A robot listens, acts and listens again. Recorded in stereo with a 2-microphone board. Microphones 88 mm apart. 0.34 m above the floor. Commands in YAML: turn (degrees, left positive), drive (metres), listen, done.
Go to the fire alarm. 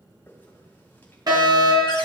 turn: -50
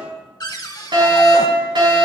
turn: -70
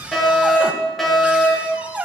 drive: 1.0
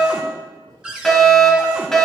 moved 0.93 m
drive: 1.0
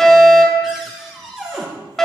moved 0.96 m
turn: 10
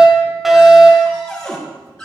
drive: 1.0
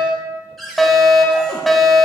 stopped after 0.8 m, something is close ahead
done: "Arrived at the fire alarm, straight ahead."